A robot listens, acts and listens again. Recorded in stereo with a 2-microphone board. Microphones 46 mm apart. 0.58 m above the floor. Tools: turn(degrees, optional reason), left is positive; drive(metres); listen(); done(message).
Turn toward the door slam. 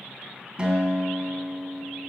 listen()
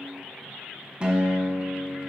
listen()
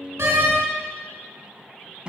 turn(degrees=-90)
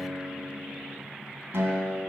done("Facing where the door slam came from. I can't hear it now.")